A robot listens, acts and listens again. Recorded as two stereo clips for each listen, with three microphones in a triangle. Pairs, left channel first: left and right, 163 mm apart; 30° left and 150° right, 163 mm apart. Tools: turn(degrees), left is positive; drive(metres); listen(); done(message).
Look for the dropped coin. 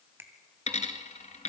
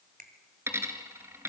turn(degrees=135)
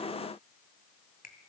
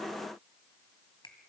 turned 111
turn(degrees=25)
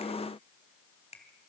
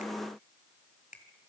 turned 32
done("Facing where the dropped coin came from. I can't hear it now.")